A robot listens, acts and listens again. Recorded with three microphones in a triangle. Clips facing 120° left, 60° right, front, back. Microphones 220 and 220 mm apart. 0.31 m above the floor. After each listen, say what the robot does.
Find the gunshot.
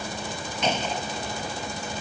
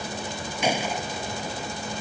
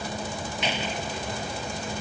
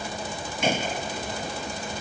Turn 140° right.
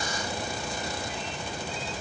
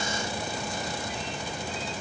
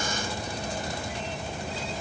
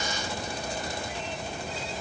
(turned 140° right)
I heard a gunshot from this way, but can't make it out now.